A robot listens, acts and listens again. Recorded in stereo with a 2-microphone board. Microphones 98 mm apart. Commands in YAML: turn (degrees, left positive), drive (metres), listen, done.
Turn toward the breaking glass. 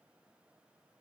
listen: true
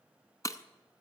turn: 35
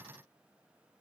listen: true
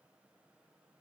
done: "I heard breaking glass, but can't make it out now. It was about straight ahead or 110° left."